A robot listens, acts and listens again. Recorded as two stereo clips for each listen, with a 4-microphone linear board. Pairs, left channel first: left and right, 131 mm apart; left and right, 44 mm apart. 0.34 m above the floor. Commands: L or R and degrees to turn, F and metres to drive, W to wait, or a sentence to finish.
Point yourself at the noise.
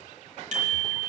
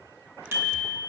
R70
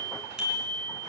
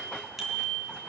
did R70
Found it: a bicycle bell, straight ahead.